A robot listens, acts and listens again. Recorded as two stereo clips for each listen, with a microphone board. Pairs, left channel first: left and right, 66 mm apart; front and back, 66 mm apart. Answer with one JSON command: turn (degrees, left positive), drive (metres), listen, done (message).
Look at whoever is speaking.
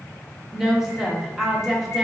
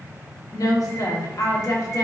{"done": "Facing the woman speaking, under 1 m away."}